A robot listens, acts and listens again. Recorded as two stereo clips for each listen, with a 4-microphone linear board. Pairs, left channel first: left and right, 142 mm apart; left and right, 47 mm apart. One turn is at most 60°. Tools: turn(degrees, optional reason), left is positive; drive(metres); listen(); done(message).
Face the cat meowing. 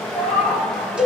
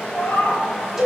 turn(degrees=60)
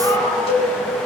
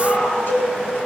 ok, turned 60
turn(degrees=30, reason="Nothing new. It was at 30° left.")
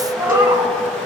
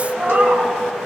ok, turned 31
turn(degrees=-20, reason="The cat meowing is now 20° right.")
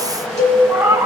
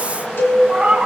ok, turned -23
turn(degrees=-25, reason="The cat meowing is now 25° right.")
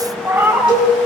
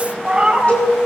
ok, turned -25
turn(degrees=-15, reason="The cat meowing is now 15° right.")
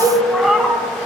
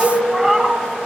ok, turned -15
done("Found it: a cat meowing, straight ahead.")